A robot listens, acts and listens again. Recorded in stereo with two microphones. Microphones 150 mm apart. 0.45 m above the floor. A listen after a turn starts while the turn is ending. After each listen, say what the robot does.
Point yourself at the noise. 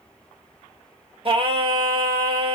Turn 40° right.
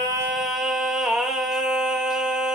Found it: singing, straight ahead, under 1 m away.